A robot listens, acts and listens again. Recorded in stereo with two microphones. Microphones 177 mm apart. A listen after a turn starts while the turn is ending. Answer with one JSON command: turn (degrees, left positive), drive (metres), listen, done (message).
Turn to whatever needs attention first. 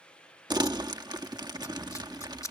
{"listen": true}
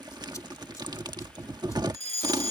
{"turn": -35}
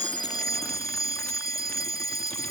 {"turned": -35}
{"turn": -100}
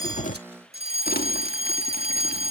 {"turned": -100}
{"turn": -45}
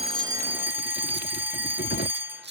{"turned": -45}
{"turn": -15}
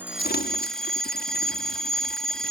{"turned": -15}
{"done": "Facing the fire alarm."}